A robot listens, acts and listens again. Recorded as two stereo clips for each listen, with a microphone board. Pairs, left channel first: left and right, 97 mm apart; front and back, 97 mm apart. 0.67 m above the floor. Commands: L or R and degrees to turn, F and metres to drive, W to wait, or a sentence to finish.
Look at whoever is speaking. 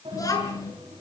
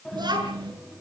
L140
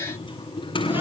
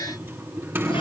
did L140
W
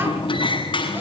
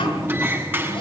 W
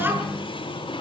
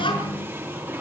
R25
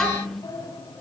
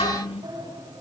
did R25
Facing the child speaking.